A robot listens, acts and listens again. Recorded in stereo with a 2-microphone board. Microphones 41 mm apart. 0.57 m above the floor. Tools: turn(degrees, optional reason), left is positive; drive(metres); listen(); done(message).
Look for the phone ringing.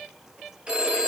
turn(degrees=-25, reason="The phone ringing: about 25° right or 155° right.")
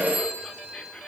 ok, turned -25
turn(degrees=-130, reason="So it is at 130° right.")
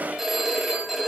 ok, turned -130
done("Facing the phone ringing.")